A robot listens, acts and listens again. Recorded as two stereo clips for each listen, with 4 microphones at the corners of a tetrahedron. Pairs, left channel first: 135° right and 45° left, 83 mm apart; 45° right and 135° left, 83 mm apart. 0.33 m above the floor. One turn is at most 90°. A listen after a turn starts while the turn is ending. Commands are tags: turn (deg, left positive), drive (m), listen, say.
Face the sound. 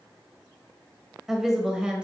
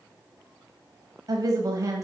<turn deg="90"/>
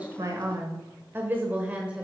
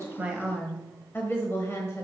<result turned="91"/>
<turn deg="-25"/>
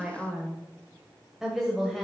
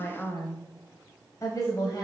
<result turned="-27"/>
<turn deg="-45"/>
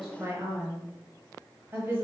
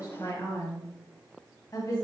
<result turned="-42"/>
<turn deg="-15"/>
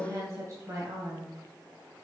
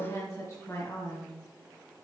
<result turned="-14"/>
<say>Facing the woman speaking.</say>